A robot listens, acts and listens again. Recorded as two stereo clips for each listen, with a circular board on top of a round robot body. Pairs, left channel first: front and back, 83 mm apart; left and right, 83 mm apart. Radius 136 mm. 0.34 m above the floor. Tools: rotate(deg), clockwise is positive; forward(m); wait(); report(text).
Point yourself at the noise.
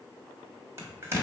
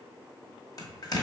rotate(-125)
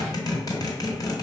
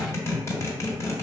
rotate(-35)
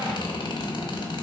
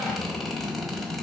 report("Facing the zipper, 1 to 2 m away.")